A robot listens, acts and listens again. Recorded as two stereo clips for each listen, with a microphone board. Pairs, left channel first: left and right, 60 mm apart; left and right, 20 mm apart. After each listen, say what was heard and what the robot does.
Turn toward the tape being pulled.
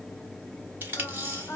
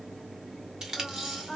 The tape being pulled: about 35° right or 145° right. Turn 35° right.
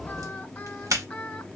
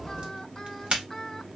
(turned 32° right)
So it is at 110° right. Turn 110° right.
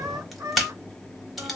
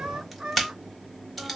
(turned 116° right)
Facing the tape being pulled.